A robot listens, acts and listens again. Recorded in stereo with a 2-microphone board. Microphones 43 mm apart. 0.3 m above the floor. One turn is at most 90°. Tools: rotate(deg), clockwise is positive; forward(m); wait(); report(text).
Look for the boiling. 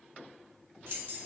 wait()
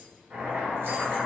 rotate(25)
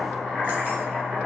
report("Facing the boiling.")